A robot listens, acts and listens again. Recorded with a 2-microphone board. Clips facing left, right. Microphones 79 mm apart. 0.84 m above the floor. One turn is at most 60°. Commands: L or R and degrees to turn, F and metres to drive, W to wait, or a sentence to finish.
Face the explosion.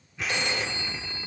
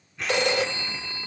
L30
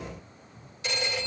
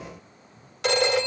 W
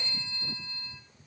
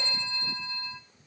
I heard an explosion, but can't make it out now. It was about 25° right or 145° left.